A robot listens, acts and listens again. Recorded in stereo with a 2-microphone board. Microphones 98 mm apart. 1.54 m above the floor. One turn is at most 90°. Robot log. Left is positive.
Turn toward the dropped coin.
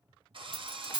note: The dropped coin: about 15° right or 165° right.
cmd yaw -15
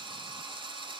cmd idle
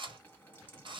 end: I heard a dropped coin, but can't make it out now. It was about straight ahead or 150° right.